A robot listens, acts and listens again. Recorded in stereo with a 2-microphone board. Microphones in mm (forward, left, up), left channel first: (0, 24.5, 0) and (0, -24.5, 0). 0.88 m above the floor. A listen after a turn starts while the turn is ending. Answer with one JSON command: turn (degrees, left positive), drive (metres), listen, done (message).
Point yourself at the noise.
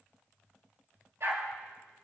{"turn": -60}
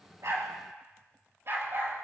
{"turn": -55}
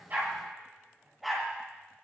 {"done": "Found it: a dog barking, straight ahead."}